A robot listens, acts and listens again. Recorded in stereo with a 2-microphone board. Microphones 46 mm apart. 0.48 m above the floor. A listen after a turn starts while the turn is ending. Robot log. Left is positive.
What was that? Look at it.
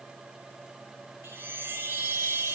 note: The chime: about 60° right or 120° right.
cmd yaw -60
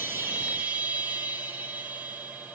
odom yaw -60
note: So it is at 45° right.
cmd yaw -45
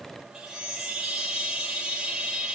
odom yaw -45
note: The chime is now 10° right.
cmd yaw -10
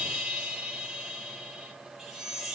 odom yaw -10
end: Facing the chime.